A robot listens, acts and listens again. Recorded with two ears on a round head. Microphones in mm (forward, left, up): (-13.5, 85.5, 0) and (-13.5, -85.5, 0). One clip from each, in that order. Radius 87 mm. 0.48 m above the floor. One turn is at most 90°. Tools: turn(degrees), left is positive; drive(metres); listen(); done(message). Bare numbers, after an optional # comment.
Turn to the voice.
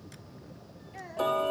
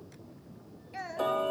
# The child speaking: about 40° right or 140° right.
turn(-40)
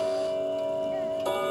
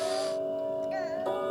listen()
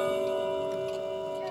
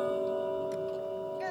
listen()
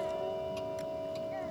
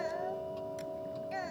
done("I heard a child speaking, but can't make it out now. It was about straight ahead or 100° right.")